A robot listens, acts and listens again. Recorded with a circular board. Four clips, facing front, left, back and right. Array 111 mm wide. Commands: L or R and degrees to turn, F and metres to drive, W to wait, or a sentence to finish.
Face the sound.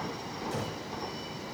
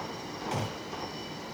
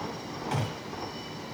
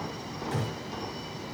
L155
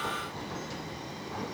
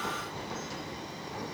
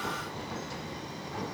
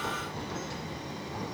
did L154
I heard a gunshot from this way, but can't make it out now.